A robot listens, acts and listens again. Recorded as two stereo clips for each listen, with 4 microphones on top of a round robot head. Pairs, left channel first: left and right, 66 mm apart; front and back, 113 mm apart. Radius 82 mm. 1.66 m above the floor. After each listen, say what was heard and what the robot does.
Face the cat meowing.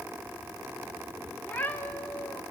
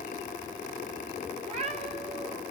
The cat meowing: 155° left. Turn 155° left.
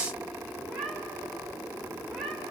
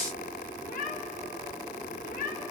Facing the cat meowing.